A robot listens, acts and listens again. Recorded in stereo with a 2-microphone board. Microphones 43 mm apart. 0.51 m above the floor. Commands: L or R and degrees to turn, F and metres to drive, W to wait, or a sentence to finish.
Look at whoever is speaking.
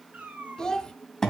L30
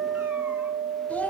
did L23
L140
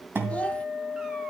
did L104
L35
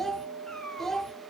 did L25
L10
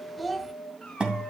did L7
Found it: a child speaking, straight ahead.